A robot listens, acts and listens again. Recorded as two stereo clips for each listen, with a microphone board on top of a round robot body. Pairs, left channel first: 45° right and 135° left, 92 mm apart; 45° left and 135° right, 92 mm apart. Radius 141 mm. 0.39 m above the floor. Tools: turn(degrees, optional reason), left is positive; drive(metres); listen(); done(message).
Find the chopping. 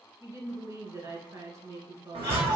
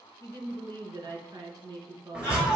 turn(degrees=145, reason="The chopping: 145° left.")
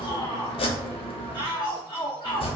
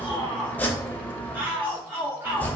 turn(degrees=-25, reason="The chopping is now 25° right.")
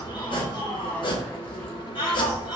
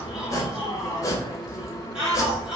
turn(degrees=-10, reason="The chopping is now 10° right.")
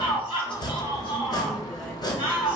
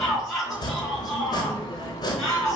done("Facing the chopping, under 1 m away.")